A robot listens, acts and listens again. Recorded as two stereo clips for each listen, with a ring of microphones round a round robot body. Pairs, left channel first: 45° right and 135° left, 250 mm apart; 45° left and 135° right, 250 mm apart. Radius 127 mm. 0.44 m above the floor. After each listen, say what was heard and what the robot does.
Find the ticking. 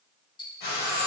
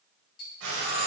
The ticking: 25° left. Turn 25° left.
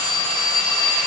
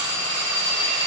Keep listening.
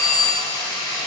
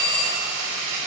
Keep listening.
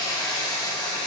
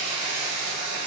Facing where the ticking came from. I can't hear it now.